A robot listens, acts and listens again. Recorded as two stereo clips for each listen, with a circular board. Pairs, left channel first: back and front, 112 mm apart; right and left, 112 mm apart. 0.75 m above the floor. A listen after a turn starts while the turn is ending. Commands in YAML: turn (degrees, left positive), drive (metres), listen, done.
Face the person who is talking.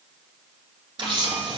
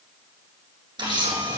listen: true
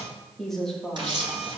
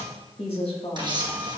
turn: -95
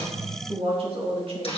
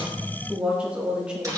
turn: 10
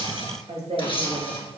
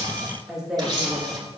done: "Found it: a woman speaking, straight ahead, 1 to 2 m away."